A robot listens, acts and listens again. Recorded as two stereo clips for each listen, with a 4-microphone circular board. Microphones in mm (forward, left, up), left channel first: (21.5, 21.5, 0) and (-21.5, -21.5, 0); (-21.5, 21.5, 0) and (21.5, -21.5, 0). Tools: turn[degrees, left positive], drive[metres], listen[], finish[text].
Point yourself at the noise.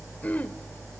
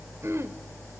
Thought: The throat clearing: 15° right.
Action: turn[-15]
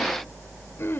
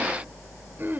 Action: finish[Facing the throat clearing, 1 to 2 m away.]